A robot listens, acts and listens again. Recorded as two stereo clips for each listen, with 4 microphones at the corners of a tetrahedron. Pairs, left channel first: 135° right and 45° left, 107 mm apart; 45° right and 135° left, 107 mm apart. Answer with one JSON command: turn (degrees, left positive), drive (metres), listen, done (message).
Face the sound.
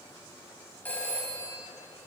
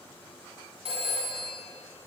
{"turn": 150}
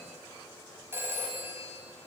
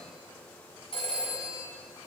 {"turn": -20}
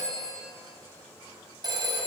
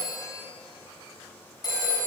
{"done": "Facing the phone ringing."}